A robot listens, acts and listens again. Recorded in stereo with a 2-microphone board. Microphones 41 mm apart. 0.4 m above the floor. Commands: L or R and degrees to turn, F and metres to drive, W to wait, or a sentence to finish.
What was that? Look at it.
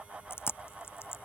L75
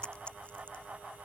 L30
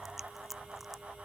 Found it: chewing, straight ahead.